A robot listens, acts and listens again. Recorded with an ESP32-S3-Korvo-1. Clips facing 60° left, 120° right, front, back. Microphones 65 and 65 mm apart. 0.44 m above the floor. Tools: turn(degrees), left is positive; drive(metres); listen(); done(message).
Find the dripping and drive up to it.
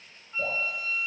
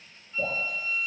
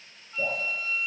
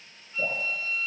turn(degrees=-75)
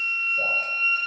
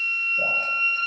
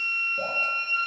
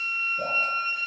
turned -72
listen()
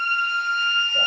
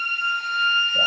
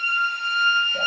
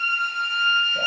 listen()
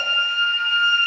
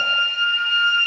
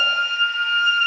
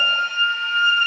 done("I heard dripping from this way, but can't make it out now. I did not reach it.")